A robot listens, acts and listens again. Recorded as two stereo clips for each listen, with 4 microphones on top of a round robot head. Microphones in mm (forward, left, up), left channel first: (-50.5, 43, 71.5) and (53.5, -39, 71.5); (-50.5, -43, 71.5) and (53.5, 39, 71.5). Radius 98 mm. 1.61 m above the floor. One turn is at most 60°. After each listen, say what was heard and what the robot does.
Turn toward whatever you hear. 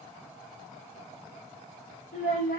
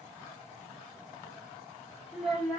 The child speaking: 125° left. Turn 60° left.
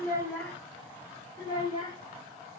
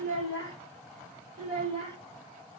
The child speaking is now 85° left. Turn 60° left.
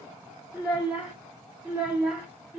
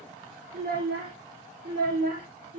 The child speaking is now 45° left. Turn 45° left.
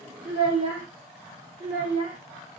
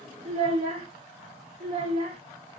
Facing the child speaking.